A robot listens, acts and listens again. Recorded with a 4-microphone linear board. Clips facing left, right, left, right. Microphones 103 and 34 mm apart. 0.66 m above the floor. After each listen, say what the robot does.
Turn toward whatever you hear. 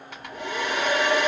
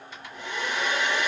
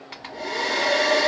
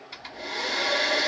Turn 60° left.
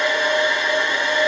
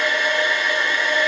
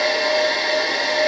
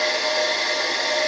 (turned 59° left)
Turn 30° left.
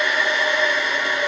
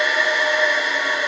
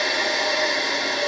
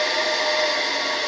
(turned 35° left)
Found it: a hair dryer, straight ahead.